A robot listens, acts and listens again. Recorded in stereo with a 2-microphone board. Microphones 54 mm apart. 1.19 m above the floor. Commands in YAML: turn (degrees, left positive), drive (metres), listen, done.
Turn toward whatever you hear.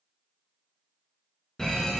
turn: 30
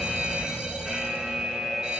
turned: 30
turn: -15
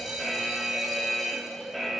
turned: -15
done: "Facing the fire alarm, 1 to 2 m away."